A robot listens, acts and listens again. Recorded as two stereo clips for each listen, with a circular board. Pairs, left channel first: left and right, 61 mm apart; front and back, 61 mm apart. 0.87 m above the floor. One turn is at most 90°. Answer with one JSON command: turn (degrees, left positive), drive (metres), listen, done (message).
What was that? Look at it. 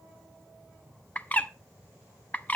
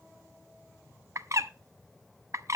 {"turn": 90}
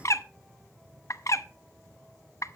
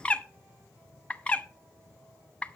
{"turn": 70}
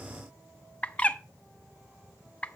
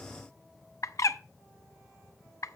{"turn": 25}
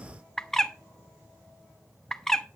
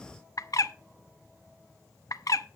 {"turn": 10}
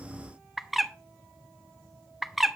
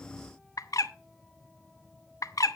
{"done": "Found it: a bird, straight ahead."}